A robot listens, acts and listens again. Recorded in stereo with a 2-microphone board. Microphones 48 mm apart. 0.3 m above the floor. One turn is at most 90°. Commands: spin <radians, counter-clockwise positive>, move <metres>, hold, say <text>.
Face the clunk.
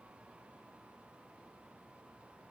hold
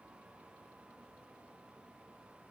hold
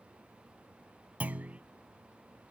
spin -0.61
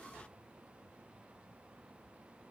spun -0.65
hold
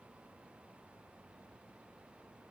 say I heard a clunk, but can't make it out now. It was about 5° left or 110° right.